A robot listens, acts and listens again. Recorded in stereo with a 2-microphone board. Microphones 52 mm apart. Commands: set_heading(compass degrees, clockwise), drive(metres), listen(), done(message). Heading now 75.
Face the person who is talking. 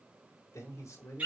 set_heading(5)
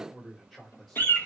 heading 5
done("Facing the man speaking.")